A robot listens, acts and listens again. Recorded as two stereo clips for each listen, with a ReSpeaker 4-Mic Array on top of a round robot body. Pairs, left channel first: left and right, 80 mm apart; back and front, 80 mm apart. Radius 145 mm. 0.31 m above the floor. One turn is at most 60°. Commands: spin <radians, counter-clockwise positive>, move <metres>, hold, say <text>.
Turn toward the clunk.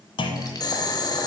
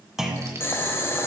spin 1.05
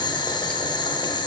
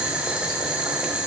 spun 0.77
spin 0.70
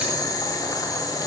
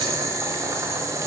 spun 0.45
spin 0.26
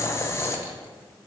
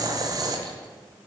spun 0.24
say Facing where the clunk came from. I can't hear it now.